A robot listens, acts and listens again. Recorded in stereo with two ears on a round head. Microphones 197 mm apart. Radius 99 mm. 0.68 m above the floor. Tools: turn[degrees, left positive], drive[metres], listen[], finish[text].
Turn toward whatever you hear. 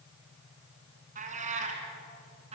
Thought: The cat meowing: about 30° right or 150° right.
Action: turn[-30]
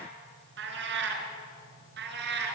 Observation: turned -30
Thought: So it is at 130° right.
Action: turn[-130]
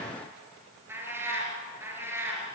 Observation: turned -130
Thought: The cat meowing is now 10° right.
Action: turn[-10]
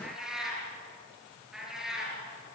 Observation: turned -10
Action: finish[Facing the cat meowing.]